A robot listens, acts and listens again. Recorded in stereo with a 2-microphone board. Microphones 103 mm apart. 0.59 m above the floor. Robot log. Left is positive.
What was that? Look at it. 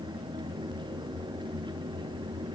cmd idle
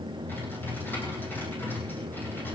note: The typing on a keyboard: about 25° left or 155° left.
cmd yaw +25
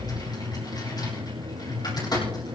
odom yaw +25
note: So it is at 135° left.
cmd yaw +135
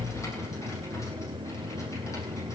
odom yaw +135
cmd idle
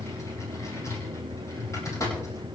note: The typing on a keyboard is now 35° left.
cmd yaw +35
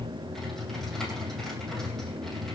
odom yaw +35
end: Facing the typing on a keyboard.